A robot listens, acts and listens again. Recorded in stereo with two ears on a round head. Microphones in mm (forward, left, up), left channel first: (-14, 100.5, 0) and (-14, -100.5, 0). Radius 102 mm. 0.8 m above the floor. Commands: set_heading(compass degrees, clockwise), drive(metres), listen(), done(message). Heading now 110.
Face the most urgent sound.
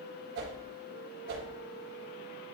listen()
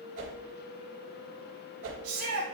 set_heading(180)
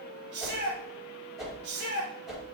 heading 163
set_heading(208)
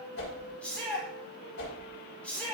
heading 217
done("Facing the shout, 2 to 4 m away.")